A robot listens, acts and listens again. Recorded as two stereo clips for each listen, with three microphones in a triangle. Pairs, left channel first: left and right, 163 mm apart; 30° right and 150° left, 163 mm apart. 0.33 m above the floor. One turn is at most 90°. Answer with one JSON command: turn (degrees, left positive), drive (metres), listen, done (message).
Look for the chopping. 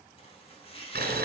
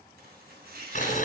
{"turn": 90}
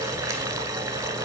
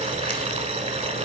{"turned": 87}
{"turn": 55}
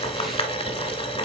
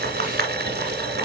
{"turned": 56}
{"listen": true}
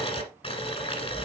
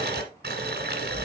{"done": "I heard chopping from this way, but can't make it out now."}